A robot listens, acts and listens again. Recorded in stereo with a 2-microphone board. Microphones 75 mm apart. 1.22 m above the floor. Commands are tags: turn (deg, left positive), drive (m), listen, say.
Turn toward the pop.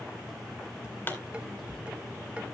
<turn deg="30"/>
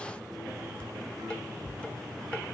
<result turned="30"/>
<listen/>
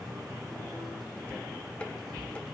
<say>I heard a pop, but can't make it out now. It was about straight ahead or 120° left.</say>